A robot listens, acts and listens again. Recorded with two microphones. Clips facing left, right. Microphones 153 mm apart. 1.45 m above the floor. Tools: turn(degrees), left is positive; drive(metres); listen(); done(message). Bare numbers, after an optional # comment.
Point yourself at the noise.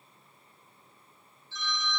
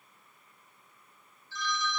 # The phone ringing: about 20° left or 160° left.
turn(20)
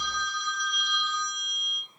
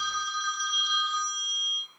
done("Found it: a phone ringing, straight ahead, 1 to 2 m away.")